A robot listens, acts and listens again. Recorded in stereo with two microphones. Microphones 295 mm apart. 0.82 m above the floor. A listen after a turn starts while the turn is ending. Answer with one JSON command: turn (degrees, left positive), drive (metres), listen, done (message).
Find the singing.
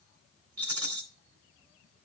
{"listen": true}
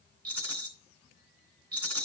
{"listen": true}
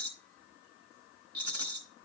{"done": "I can't make out singing to turn to."}